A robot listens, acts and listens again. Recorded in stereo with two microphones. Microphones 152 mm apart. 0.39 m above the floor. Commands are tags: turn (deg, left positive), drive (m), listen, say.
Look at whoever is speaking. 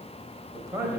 <turn deg="-20"/>
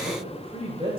<turn deg="-135"/>
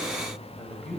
<say>Facing the man speaking.</say>